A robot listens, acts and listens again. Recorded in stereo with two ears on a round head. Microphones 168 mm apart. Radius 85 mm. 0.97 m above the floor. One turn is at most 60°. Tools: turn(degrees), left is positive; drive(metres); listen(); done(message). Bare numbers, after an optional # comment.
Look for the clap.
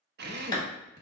# The clap: about 20° left or 160° left.
turn(20)
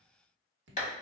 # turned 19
# So it is at 140° left.
turn(60)
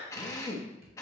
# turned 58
# Nothing new. It was at 80° left.
turn(60)
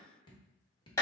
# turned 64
# The clap is now 15° left.
turn(15)
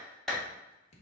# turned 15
done("Found it: a clap, straight ahead, 1 to 2 m away.")